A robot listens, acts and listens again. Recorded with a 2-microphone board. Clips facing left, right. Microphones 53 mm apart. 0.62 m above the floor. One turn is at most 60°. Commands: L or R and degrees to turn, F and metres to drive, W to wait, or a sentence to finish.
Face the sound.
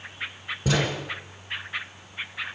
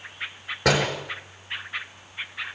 R60
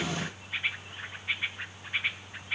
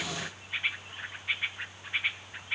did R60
R30
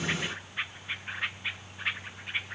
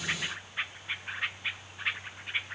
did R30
I heard a door slam from this way, but can't make it out now.